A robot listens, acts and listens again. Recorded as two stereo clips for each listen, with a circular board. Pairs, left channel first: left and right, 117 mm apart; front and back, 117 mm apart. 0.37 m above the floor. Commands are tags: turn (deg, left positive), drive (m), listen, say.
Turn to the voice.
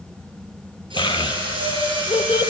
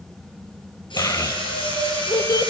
<turn deg="55"/>
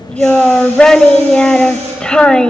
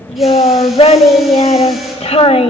<turn deg="10"/>
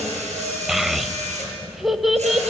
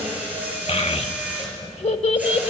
<say>Found it: a child speaking, straight ahead.</say>